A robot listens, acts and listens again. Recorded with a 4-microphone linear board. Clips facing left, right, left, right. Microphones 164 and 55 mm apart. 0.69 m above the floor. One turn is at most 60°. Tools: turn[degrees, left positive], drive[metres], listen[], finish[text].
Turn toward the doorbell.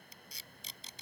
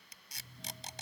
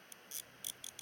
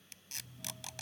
Thought: The doorbell: about 70° right or 110° right.
Action: turn[-60]
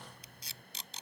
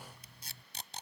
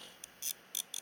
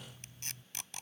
Thought: So it is at 10° right.
Action: turn[-10]
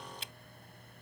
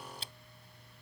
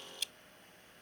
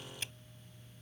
Action: finish[Facing the doorbell.]